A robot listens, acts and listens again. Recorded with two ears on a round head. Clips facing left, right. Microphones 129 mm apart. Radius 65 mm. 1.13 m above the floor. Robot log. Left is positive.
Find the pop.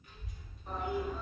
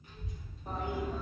cmd idle
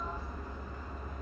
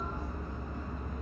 cmd idle
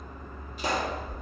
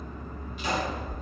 note: The pop: about 35° left or 145° left.
cmd yaw +35
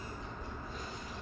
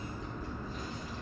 cmd idle
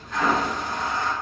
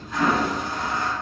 end: I heard a pop, but can't make it out now. It was about straight ahead or 110° left.